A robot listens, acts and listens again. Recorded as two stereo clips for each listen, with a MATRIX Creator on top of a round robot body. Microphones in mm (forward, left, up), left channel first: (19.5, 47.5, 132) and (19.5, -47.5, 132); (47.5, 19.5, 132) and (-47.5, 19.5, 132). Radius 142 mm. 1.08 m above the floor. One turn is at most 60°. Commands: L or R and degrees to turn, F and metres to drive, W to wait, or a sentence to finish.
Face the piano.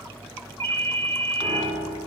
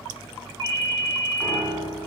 R60
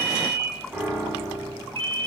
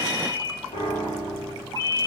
R10
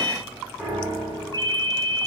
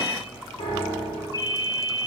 Facing the piano, 2 to 4 m away.